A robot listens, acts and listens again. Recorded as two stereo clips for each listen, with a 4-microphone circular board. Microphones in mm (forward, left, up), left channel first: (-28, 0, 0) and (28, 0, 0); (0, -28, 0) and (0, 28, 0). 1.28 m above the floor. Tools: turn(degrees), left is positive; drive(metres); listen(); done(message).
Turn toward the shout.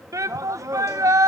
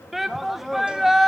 done("Found it: a shout, straight ahead, under 1 m away.")